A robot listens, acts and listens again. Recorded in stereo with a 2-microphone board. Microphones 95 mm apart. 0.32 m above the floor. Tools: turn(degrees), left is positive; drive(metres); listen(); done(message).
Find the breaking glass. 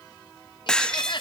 turn(degrees=30)
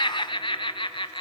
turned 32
listen()
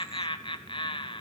done("I heard breaking glass, but can't make it out now. It was about 25° right or 140° left.")